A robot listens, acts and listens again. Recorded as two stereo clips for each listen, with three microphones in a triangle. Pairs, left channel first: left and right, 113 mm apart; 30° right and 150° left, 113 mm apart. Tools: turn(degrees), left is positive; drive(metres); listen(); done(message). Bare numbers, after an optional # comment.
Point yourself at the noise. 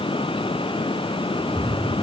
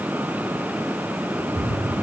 # The cat meowing: 175° left.
turn(175)
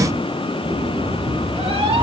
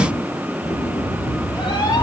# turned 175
# The cat meowing is now 75° right.
turn(-75)
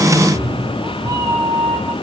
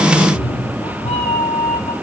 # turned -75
# The cat meowing is now 35° right.
turn(-35)
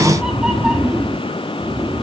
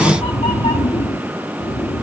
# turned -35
# The cat meowing is now 10° right.
turn(-10)
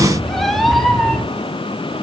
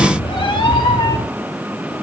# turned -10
done("Found it: a cat meowing, straight ahead, 1 to 2 m away.")